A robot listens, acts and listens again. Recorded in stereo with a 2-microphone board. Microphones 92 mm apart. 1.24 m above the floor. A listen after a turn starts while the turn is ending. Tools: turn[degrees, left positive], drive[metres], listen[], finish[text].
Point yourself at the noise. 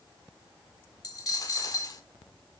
Thought: The dropped coin: about 40° left or 140° left.
Action: turn[40]
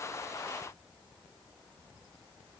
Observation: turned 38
Action: listen[]
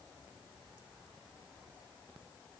Action: finish[I heard a dropped coin, but can't make it out now. It was about 5° left or 100° left.]